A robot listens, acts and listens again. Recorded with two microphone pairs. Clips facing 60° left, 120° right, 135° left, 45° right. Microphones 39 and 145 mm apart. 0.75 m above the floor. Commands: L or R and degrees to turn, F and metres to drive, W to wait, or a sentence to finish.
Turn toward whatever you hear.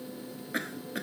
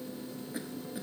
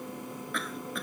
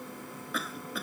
L40
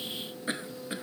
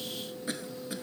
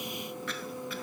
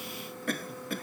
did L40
Facing the cough.